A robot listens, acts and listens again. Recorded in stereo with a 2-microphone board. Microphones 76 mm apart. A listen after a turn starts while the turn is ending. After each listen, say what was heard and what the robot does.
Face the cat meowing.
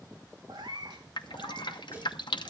Turn 90° right.
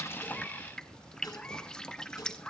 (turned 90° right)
Keep listening.
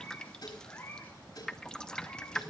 The cat meowing is now 20° left. Turn 20° left.
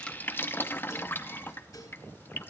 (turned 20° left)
Keep listening.
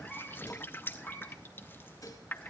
Facing the cat meowing, over 4 m away.